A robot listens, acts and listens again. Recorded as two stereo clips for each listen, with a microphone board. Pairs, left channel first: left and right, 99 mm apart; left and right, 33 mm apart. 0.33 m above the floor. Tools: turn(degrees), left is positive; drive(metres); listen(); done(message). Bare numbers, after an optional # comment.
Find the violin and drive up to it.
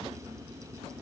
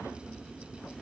listen()
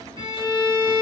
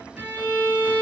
# The violin: about 50° right or 130° right.
turn(-50)
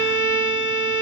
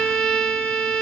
# So it is at 10° right.
turn(-10)
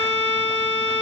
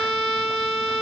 drive(1.0)
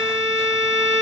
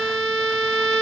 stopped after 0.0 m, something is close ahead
done("Something is in my way. I am facing the violin but have not reached it.")